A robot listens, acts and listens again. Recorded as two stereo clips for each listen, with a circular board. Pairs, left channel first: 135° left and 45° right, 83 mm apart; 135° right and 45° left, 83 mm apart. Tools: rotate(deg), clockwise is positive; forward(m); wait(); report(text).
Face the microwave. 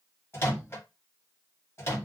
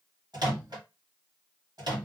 rotate(-75)
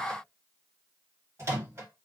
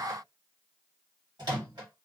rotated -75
rotate(-10)
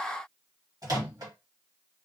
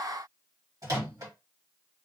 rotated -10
report("Facing the microwave.")